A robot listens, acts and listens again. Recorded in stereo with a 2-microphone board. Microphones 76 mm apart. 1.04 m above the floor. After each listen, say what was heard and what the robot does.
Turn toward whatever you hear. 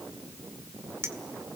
The clink: about 35° right or 145° right. Turn 35° right.
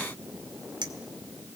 So it is at 110° right. Turn 110° right.
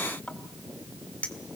The clink is now 20° left. Turn 20° left.
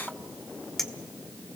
Found it: a clink, straight ahead.